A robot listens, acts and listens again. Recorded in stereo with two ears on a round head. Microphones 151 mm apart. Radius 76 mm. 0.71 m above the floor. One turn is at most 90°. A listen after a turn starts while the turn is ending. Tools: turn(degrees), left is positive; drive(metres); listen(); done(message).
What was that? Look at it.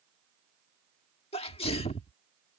turn(degrees=35)
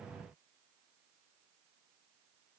listen()
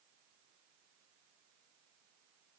done("I heard a sneeze, but can't make it out now. It was about straight ahead or 110° left.")